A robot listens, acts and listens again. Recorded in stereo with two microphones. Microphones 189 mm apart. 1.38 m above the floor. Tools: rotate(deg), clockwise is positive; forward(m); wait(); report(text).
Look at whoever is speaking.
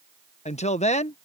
rotate(-35)
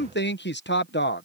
rotate(-110)
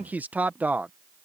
rotate(10)
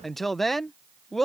report("Found it: a woman speaking, straight ahead.")